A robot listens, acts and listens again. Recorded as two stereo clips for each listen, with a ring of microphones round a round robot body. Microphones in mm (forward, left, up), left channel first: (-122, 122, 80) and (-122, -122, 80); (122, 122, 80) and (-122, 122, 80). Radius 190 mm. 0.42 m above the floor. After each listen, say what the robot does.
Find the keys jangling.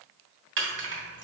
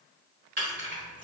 Turn 130° right.
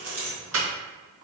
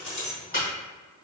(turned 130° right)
Turn 55° right.
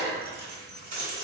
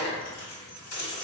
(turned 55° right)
Turn 15° right.
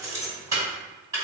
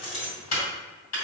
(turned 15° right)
Turn 10° right.
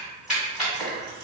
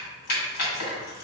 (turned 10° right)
Found it: keys jangling, straight ahead, 2 to 4 m away.